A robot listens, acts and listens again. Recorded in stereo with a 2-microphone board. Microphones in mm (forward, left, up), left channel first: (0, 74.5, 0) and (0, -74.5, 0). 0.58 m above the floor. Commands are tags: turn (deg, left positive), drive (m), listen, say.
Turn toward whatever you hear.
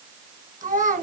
<turn deg="-60"/>
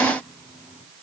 <listen/>
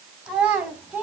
<turn deg="-10"/>
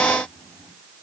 <listen/>
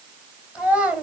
<turn deg="-10"/>
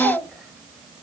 <say>Found it: a child speaking, straight ahead.</say>